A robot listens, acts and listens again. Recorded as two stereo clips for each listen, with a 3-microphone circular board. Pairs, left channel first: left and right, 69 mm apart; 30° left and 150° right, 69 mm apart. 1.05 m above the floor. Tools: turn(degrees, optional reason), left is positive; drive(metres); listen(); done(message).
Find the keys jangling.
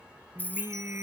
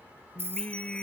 turn(degrees=155, reason="The keys jangling: 155° left.")
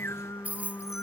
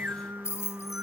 turn(degrees=-20, reason="The keys jangling is now 20° right.")
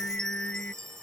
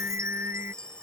listen()
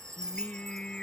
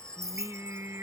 turn(degrees=-10, reason="The keys jangling is now 10° right.")
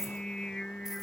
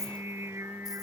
listen()
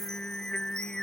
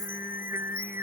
listen()
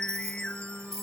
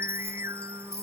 done("Found it: keys jangling, straight ahead.")